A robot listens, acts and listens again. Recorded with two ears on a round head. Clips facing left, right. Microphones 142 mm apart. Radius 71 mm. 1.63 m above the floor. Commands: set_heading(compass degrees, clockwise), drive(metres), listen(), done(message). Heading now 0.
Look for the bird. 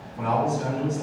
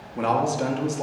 listen()
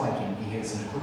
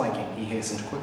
listen()
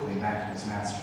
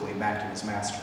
done("I can't make out a bird, only a man speaking.")